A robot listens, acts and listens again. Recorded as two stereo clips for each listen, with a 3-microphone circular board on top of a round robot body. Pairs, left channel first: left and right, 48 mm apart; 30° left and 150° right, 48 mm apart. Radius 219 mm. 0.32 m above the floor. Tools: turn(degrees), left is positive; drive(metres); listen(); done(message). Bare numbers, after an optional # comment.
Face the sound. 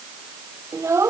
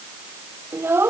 # The child speaking: 110° right.
turn(-110)
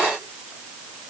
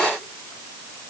listen()
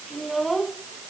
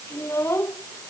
done("Facing the child speaking.")